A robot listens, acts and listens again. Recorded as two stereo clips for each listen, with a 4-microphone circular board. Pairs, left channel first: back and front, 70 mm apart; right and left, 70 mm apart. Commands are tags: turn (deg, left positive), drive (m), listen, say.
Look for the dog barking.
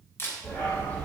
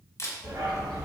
<turn deg="120"/>
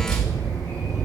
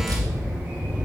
<turn deg="25"/>
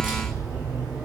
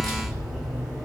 <turn deg="10"/>
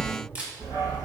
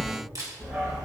<turn deg="15"/>
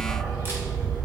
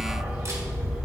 <turn deg="10"/>
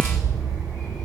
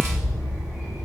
<say>Facing the dog barking.</say>